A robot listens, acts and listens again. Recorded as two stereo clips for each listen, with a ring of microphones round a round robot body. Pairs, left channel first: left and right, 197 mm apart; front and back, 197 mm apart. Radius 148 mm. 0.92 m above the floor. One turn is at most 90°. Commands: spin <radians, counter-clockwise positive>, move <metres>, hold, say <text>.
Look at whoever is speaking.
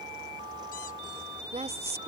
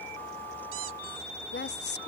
spin -0.52
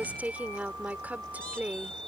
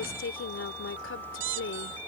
spin -0.17
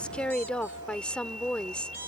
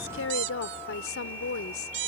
say Facing the woman speaking.